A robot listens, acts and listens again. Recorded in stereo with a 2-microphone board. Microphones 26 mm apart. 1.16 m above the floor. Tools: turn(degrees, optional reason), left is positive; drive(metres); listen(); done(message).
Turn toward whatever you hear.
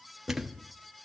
turn(degrees=-15, reason="The thud: about 15° right or 165° right.")
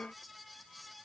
listen()
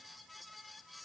done("I heard a thud, but can't make it out now. It was about straight ahead or 150° right.")